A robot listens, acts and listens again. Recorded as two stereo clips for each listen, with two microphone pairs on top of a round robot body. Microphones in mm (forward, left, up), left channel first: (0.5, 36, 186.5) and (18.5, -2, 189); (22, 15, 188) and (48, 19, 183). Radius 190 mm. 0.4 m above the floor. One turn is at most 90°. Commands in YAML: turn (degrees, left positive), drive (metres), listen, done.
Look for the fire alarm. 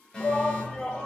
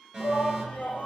turn: 55
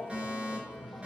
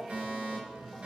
done: "Facing the fire alarm, over 4 m away."